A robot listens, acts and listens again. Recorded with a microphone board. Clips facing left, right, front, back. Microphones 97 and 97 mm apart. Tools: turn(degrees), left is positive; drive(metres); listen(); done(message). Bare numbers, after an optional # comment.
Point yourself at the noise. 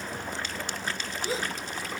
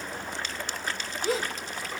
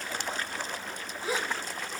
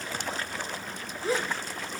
# The gasp: 80° right.
turn(-80)
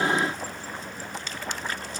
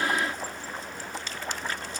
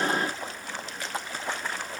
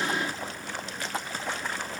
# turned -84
done("Facing where the gasp came from. I can't hear it now.")